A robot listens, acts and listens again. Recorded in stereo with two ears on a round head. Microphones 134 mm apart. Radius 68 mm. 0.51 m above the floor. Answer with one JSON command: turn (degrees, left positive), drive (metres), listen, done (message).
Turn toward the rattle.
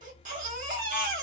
{"listen": true}
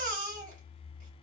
{"listen": true}
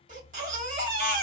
{"done": "I can't make out a rattle to turn to."}